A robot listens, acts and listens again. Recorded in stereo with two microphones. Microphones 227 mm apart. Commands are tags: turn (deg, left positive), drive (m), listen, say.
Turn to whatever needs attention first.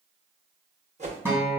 <listen/>
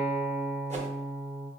<listen/>
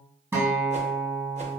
<say>I can't make out anything urgent, only a whoosh and a guitar.</say>